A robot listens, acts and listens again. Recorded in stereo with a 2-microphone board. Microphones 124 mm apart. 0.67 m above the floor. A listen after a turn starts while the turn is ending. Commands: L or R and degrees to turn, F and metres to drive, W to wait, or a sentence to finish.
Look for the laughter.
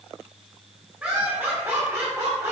R25
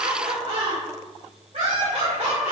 R115
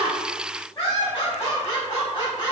L35
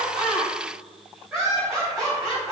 R10
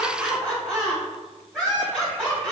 Found it: laughter, straight ahead, 2 to 4 m away.